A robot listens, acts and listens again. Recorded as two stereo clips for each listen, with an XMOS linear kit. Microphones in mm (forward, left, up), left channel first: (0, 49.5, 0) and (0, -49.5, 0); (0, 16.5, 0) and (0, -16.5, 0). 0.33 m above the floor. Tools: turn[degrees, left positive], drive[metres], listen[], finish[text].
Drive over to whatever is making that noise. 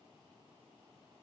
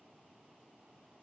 Action: listen[]
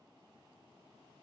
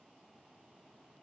Action: listen[]
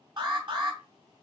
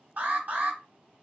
Thought: The alarm: about 50° right or 130° right.
Action: turn[-50]
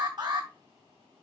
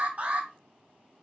Thought: So it is at 65° right.
Action: turn[-65]
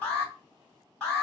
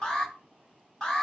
Thought: The alarm is now 15° left.
Action: turn[15]
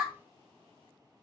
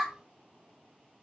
Action: drive[1.0]
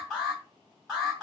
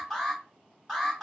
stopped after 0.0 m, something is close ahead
Action: finish[Something is in my way. I am facing the alarm but have not reached it.]